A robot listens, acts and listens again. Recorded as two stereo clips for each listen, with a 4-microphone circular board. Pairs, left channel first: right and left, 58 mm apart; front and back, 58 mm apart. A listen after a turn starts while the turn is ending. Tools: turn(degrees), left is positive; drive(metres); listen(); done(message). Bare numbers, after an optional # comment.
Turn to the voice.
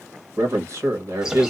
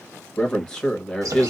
# The man speaking: 75° left.
turn(75)
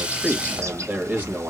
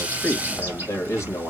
# The man speaking is now 30° left.
turn(30)
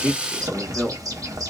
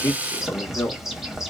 done("Found it: a man speaking, straight ahead.")